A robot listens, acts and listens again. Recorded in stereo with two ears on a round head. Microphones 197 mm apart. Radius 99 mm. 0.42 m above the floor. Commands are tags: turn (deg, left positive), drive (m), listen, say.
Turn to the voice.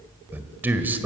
<turn deg="-30"/>
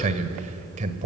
<turn deg="-135"/>
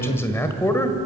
<turn deg="15"/>
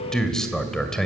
<say>Facing the man speaking.</say>